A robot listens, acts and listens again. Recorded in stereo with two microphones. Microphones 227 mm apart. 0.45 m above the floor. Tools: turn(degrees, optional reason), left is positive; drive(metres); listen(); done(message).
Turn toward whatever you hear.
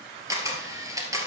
turn(degrees=-30)
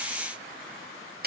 turn(degrees=-135, reason="So it is at 135° right.")
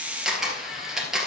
done("Facing the camera shutter.")